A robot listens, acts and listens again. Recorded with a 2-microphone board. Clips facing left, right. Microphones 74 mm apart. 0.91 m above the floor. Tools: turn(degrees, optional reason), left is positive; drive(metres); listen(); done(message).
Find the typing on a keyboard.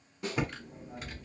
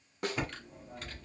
turn(degrees=30)
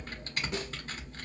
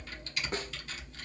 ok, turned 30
turn(degrees=140, reason="So it is at 140° left.")
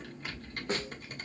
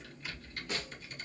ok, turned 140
turn(degrees=50, reason="The typing on a keyboard is now 50° left.")
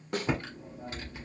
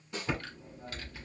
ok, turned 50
turn(degrees=20, reason="The typing on a keyboard is now 20° left.")
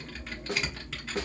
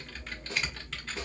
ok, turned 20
done("Found it: typing on a keyboard, straight ahead.")